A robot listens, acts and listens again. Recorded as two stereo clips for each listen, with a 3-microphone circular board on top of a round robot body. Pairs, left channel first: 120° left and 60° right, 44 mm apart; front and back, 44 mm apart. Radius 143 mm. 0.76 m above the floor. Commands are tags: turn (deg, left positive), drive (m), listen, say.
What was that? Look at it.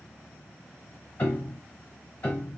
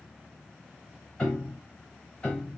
<turn deg="70"/>
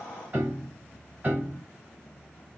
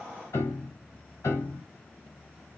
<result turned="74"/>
<say>Found it: a piano, straight ahead, 2 to 4 m away.</say>